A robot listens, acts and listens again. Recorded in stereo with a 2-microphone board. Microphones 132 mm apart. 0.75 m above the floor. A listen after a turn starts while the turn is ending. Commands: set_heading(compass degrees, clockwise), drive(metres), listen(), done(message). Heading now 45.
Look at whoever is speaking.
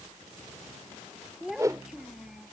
set_heading(75)
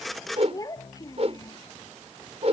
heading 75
set_heading(50)
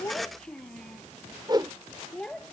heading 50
done("Found it: a child speaking, straight ahead.")